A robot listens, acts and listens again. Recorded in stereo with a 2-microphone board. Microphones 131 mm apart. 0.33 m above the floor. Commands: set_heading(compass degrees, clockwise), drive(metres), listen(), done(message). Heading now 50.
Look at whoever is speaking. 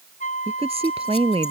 set_heading(100)
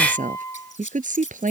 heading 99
set_heading(184)
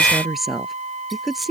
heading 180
done("Facing the woman speaking.")